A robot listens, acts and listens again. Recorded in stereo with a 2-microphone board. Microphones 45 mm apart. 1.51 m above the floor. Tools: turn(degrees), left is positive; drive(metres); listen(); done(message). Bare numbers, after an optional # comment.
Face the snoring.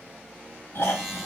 # The snoring: about 65° left or 115° left.
turn(65)
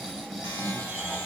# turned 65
done("Found it: snoring, straight ahead, 1 to 2 m away.")